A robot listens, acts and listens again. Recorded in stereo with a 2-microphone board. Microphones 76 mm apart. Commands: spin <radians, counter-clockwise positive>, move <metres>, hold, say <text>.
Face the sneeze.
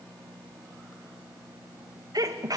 spin -0.96
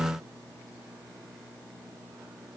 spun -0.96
hold
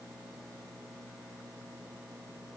say I heard a sneeze, but can't make it out now. It was about straight ahead or 70° right.